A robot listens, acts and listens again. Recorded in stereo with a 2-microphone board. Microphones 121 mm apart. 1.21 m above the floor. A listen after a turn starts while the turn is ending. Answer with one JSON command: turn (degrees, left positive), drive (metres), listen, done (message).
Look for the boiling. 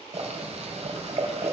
{"turn": -60}
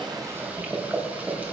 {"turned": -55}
{"turn": -15}
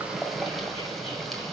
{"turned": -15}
{"done": "Found it: boiling, straight ahead, 2 to 4 m away."}